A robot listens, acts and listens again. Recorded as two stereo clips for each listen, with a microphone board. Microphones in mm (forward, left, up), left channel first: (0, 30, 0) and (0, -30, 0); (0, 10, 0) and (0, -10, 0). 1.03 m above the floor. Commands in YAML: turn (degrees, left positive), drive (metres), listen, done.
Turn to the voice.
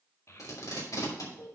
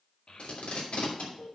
turn: 55
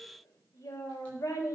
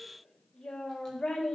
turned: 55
turn: 70
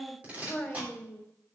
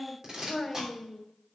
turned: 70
turn: 25
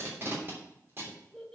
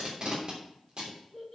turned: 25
done: "Facing the child speaking."